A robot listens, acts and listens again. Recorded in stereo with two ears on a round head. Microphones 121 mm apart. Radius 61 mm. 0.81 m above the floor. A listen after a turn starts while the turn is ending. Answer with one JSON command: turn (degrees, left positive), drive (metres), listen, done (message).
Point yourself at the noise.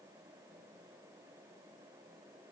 {"listen": true}
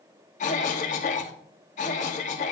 {"turn": 60}
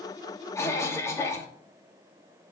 {"turn": 25}
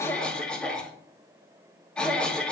{"turn": 10}
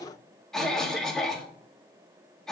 {"done": "Facing the cough, 1 to 2 m away."}